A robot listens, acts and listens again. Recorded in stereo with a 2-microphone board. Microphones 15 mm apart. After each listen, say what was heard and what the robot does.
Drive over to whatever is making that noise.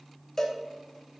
The cowbell: about 30° left or 150° left. Turn 30° left.
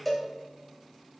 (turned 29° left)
Drive 1.0 m forward.
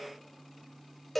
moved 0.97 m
Drive 1.0 m forward.
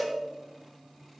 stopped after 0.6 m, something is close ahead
Arrived at the cowbell, straight ahead.